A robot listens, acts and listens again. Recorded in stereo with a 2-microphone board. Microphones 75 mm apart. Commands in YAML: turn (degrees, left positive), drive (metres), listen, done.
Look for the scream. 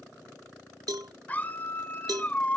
turn: 25
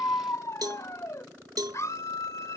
turn: 130
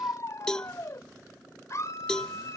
turn: 45
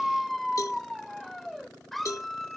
done: "Found it: a scream, straight ahead."